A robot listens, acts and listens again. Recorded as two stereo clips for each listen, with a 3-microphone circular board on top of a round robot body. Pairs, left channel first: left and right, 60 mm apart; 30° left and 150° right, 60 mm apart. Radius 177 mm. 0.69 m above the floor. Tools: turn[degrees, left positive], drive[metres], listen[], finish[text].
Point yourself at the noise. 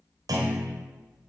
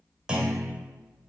Thought: The clunk: 75° right.
Action: turn[-75]
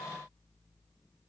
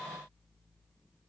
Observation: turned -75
Action: finish[Facing where the clunk came from. I can't hear it now.]